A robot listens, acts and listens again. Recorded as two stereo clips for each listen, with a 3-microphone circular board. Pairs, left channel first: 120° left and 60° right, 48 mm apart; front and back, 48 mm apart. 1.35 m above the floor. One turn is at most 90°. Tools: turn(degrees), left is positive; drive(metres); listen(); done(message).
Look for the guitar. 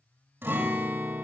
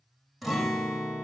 turn(degrees=-90)
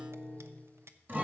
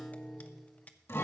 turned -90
turn(degrees=-15)
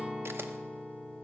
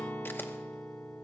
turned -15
done("Facing the guitar.")